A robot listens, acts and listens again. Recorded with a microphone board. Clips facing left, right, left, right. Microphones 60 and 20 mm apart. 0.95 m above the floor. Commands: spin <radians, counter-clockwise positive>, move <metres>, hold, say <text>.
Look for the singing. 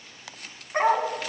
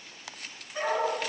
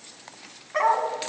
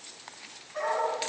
hold
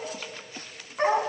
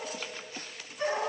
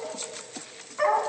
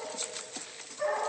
hold
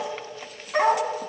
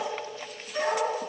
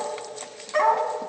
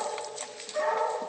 say I can't make out singing, only a dog barking.